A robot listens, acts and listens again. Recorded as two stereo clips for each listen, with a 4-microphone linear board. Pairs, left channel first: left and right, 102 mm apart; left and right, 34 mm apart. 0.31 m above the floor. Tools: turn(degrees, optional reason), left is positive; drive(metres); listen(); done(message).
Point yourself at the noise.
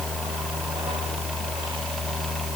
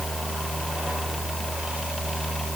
listen()
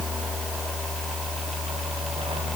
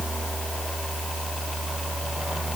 listen()
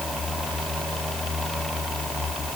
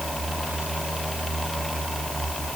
done("I can't make out anything to turn to.")